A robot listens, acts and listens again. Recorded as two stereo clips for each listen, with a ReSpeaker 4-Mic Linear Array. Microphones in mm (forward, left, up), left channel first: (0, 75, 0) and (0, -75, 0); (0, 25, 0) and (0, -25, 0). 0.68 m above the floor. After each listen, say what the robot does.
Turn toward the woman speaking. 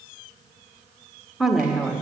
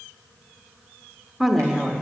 Turn 30° right.
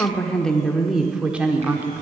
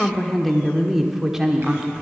Turn 15° right.
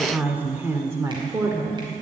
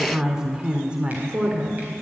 Turn 25° right.
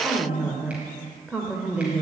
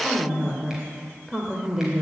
Turn 30° right.
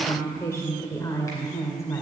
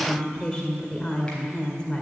Turn 20° left.
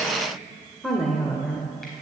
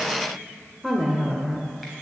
Found it: a woman speaking, straight ahead, 2 to 4 m away.